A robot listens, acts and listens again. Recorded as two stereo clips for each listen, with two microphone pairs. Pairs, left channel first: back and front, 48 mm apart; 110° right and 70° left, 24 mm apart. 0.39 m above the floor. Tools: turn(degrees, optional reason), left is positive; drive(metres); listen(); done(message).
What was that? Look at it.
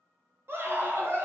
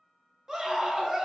turn(degrees=10, reason="The scream: 10° left.")
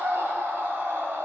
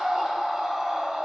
done("Facing the scream.")